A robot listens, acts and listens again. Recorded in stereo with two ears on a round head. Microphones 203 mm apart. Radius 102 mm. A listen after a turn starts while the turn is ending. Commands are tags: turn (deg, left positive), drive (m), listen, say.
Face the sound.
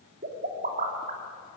<turn deg="-40"/>
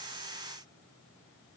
<listen/>
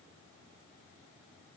<say>I heard a pop, but can't make it out now. It was about straight ahead or 100° right.</say>